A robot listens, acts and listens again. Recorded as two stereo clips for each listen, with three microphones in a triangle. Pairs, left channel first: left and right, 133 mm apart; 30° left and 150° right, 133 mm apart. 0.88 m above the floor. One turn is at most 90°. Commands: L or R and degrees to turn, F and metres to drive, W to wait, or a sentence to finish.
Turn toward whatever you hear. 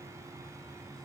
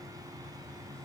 W
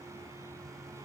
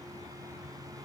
W
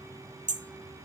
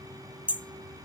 R70
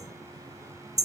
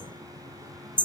R25
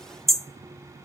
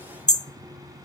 Found it: hammering, straight ahead.